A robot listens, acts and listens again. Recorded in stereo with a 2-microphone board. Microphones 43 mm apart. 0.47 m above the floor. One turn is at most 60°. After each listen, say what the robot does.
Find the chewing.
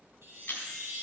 Turn 60° left.
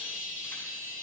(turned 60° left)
Turn 30° left.
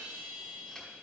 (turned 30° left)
Keep listening.
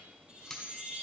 Facing the chewing, 1 to 2 m away.